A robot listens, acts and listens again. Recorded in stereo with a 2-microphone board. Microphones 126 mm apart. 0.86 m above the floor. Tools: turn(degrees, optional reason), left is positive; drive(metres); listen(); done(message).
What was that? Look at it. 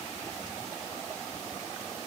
listen()
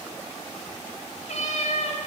turn(degrees=65, reason="The cat meowing: about 65° left or 115° left.")
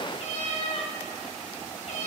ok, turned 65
turn(degrees=55, reason="So it is at 55° left.")
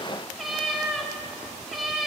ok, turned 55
done("Facing the cat meowing.")